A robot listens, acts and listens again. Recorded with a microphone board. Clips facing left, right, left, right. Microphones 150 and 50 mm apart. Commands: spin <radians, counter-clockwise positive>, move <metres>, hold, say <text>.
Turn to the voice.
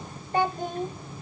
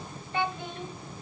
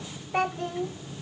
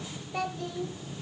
spin 0.70
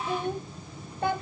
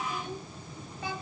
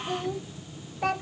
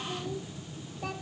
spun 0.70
spin 1.57
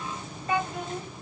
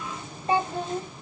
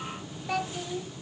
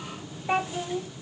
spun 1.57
spin -0.61
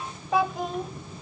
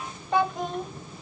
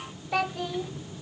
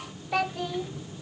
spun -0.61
say Facing the child speaking.